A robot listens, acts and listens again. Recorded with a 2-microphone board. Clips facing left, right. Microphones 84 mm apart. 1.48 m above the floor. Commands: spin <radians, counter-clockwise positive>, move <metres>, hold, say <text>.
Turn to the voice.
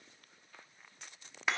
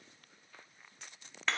hold
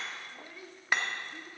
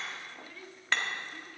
spin 0.52
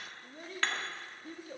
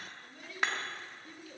spin 2.36
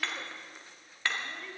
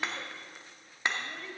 say Found it: a child speaking, straight ahead, 1 to 2 m away.